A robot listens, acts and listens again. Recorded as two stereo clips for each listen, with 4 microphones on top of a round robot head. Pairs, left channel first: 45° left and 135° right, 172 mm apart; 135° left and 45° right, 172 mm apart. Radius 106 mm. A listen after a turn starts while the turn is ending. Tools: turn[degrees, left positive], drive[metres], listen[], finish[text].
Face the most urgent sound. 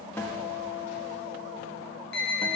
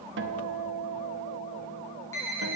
Thought: The alarm: 60° left.
Action: turn[60]
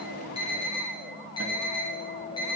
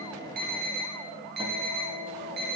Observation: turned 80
Thought: The alarm is now 20° right.
Action: turn[-20]
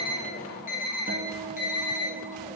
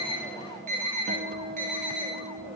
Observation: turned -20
Action: finish[Facing the alarm, over 4 m away.]